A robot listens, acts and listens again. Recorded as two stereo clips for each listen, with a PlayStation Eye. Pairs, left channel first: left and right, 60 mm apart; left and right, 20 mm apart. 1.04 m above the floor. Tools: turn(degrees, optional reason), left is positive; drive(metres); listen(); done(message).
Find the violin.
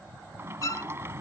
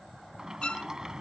turn(degrees=70, reason="The violin: about 70° left or 110° left.")
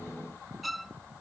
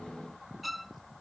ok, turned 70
done("Facing the violin.")